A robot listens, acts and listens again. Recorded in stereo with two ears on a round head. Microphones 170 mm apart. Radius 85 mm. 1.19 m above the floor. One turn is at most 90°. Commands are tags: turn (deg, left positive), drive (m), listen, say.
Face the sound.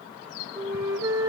<turn deg="-20"/>
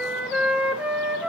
<say>Facing the flute.</say>